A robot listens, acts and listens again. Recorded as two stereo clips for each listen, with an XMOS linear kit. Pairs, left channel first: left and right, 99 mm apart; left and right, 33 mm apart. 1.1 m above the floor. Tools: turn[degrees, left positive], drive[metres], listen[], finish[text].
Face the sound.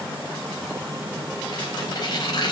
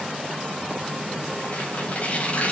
Thought: The tearing paper: about 40° left or 140° left.
Action: turn[40]
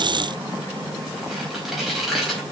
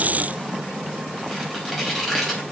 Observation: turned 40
Action: finish[Facing the tearing paper, over 4 m away.]